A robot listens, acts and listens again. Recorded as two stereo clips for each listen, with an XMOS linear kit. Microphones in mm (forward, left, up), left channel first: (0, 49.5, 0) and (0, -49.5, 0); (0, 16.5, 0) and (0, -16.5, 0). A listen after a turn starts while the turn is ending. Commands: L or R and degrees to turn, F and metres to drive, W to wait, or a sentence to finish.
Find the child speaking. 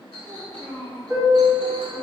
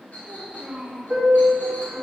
R90
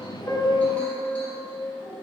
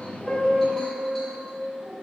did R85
R25
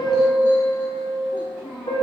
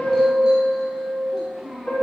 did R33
Found it: a child speaking, straight ahead.